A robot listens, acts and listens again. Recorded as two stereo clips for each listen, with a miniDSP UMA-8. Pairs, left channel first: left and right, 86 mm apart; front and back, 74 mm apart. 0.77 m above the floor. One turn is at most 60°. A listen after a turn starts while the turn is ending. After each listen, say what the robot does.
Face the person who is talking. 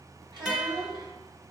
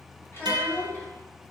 Turn 60° right.
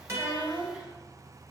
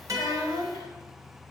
Turn 15° right.
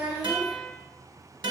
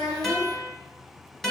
Keep listening.
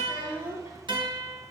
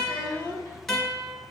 Turn 25° right.
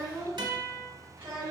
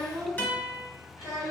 Turn 30° right.
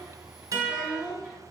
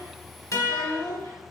Turn 10° right.
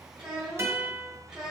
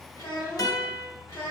Found it: a child speaking, straight ahead.